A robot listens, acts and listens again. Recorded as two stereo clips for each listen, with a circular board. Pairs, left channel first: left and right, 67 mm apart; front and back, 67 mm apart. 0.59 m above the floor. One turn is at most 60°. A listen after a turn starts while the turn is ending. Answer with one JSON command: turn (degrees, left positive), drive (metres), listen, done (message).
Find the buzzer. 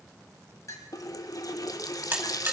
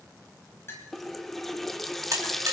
{"turn": -60}
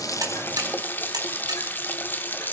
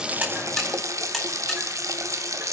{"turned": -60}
{"turn": -60}
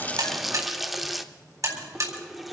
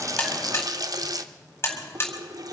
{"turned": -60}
{"turn": -60}
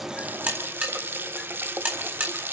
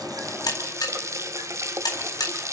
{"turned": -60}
{"turn": -25}
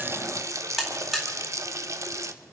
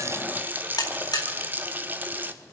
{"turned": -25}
{"done": "Facing the buzzer, 2 to 4 m away."}